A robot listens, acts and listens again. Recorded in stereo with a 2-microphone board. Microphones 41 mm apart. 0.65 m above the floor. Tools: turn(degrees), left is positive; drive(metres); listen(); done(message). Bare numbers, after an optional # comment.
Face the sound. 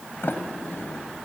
# The sliding door: about 60° left or 120° left.
turn(60)
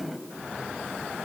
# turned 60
done("Facing the sliding door, 1 to 2 m away.")